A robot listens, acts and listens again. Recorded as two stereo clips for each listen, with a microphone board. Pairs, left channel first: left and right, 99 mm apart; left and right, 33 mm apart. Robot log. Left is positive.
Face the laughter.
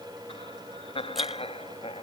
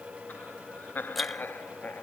note: The laughter: about 75° left or 105° left.
cmd yaw +75
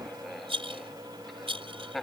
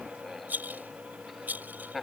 end: Found it: laughter, straight ahead.